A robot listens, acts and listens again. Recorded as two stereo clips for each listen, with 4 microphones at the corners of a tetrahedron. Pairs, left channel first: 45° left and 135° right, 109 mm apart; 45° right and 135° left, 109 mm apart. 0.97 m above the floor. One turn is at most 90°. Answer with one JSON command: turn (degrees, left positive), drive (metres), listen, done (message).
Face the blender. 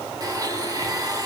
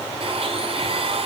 {"turn": 90}
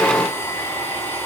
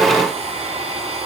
{"turn": 90}
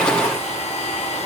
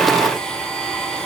{"turn": 40}
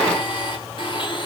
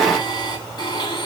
{"done": "Found it: a blender, straight ahead, 2 to 4 m away."}